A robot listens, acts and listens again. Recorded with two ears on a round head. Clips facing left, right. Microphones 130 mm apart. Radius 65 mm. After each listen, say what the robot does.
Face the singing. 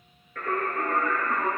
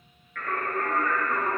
Turn 30° left.
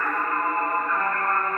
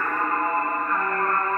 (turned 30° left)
Turn 50° right.
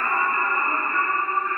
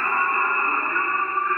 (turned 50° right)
Turn 60° right.
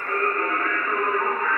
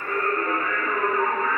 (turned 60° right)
Turn 25° right.
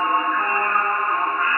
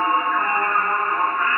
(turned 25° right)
Found it: singing, straight ahead, 2 to 4 m away.